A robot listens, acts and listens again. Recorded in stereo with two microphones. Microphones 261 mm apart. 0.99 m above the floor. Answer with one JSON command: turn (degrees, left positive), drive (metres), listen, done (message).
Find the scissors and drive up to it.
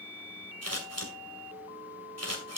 {"turn": -70}
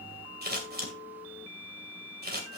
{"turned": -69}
{"turn": -40}
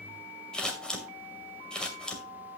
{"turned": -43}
{"drive": 1.0}
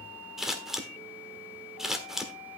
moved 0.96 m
{"drive": 1.0}
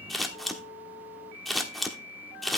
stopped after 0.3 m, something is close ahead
{"done": "I am next to the scissors."}